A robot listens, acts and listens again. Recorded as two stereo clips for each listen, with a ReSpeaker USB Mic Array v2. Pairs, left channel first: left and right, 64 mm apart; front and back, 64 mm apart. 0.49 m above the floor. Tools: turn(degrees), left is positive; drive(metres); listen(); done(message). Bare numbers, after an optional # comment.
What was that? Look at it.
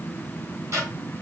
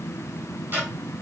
# The ticking: 125° right.
turn(-125)
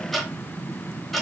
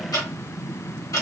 done("Found it: ticking, straight ahead, 1 to 2 m away.")